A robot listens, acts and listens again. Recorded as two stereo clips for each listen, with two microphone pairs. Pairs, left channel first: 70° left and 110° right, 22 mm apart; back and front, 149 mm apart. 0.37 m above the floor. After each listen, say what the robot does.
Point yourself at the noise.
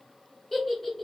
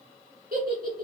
Turn 10° right.
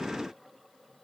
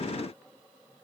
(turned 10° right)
Keep listening.
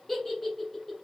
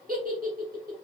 Facing the giggle, 1 to 2 m away.